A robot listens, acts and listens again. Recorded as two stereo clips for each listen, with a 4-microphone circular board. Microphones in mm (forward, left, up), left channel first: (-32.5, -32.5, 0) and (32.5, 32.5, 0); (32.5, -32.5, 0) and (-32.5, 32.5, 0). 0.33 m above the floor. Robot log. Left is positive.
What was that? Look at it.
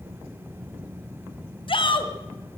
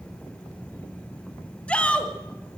note: The shout: 120° right.
cmd yaw -120
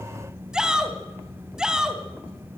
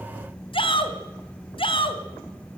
note: The shout is now 35° right.
cmd yaw -35
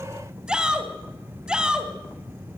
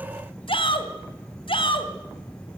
note: The shout is now 35° right.
cmd yaw -35
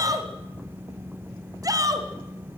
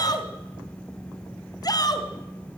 end: Facing the shout.